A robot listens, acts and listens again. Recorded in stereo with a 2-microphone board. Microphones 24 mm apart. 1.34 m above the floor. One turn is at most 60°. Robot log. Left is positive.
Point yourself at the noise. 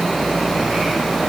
cmd idle
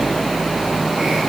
cmd idle
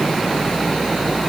end: I can't make out anything to turn to.